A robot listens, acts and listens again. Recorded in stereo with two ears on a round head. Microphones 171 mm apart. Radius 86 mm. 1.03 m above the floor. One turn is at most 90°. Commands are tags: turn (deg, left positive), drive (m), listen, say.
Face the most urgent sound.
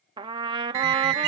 <turn deg="-60"/>
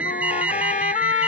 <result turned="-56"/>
<turn deg="-10"/>
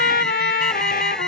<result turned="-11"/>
<listen/>
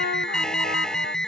<say>Facing the alarm.</say>